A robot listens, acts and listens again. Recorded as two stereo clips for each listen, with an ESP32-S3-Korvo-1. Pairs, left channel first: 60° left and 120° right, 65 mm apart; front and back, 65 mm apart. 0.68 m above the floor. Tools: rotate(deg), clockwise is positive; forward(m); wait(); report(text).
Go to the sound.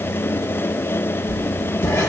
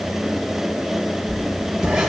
rotate(-95)
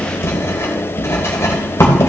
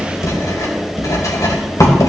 rotate(-15)
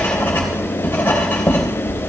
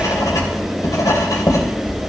forward(1.0)
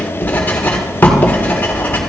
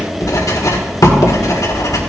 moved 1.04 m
forward(1.0)
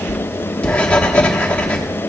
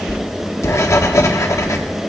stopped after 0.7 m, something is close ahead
report("Arrived at the writing, straight ahead.")